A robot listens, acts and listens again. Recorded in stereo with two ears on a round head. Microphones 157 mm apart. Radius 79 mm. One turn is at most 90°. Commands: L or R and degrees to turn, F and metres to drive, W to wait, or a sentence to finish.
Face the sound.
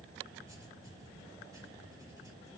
R20
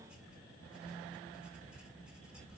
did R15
Found it: writing, straight ahead, 2 to 4 m away.